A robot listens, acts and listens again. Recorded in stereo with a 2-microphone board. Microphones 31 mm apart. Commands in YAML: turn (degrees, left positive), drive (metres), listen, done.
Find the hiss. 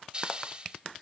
turn: -35
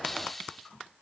done: "Found it: a hiss, straight ahead."